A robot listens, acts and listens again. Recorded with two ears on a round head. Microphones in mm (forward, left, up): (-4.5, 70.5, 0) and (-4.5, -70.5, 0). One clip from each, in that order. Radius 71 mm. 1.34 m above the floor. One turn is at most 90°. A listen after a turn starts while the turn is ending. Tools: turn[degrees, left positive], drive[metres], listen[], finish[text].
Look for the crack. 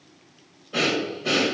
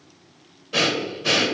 Action: listen[]
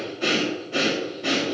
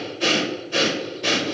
Action: listen[]
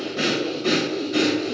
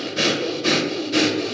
Action: finish[I can't make out a crack to turn to.]